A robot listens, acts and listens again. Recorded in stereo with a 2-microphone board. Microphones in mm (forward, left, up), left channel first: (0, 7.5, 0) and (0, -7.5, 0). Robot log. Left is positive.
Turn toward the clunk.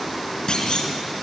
note: The clunk: about 65° left or 115° left.
cmd yaw +65
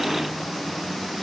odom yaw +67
cmd idle
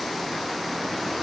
end: I heard a clunk, but can't make it out now. It was about straight ahead or 45° left.